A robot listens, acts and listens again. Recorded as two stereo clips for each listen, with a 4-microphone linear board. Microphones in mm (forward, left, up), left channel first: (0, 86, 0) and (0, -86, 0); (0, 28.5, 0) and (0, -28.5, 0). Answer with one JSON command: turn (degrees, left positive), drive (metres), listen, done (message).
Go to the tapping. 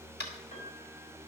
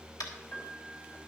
{"turn": 75}
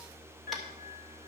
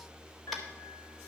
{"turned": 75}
{"listen": true}
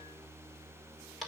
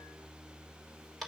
{"drive": 1.0}
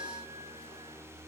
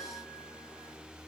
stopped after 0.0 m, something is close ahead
{"listen": true}
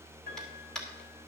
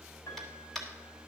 {"done": "Blocked. The tapping is further on, straight ahead."}